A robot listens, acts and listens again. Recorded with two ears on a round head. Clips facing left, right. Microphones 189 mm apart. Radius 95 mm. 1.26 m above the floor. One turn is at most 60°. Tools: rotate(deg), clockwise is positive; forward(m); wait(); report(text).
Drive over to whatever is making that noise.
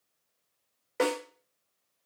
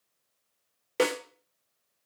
rotate(45)
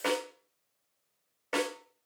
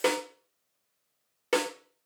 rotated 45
rotate(60)
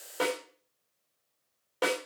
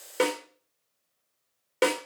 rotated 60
rotate(35)
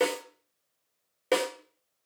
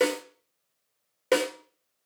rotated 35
forward(1.0)
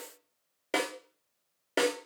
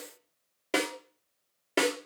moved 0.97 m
forward(1.0)
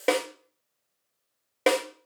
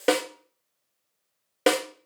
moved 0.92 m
forward(1.0)
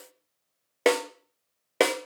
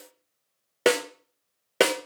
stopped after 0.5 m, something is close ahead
report("Arrived at the snare drum, straight ahead.")